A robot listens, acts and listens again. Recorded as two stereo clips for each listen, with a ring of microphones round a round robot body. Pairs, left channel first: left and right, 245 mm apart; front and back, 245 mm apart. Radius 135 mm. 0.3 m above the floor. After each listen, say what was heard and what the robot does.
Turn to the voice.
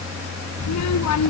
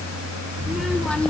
The child speaking: 85° left. Turn 85° left.
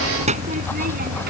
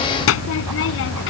The child speaking is now 35° right. Turn 35° right.
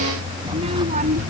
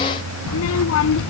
The child speaking is now 30° right. Turn 30° right.
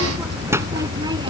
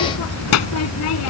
The child speaking is now 15° right. Turn 15° right.
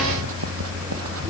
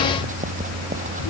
Keep listening.
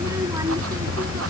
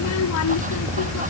The child speaking is now 10° right. Turn 10° right.
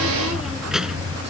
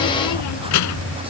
Facing the child speaking.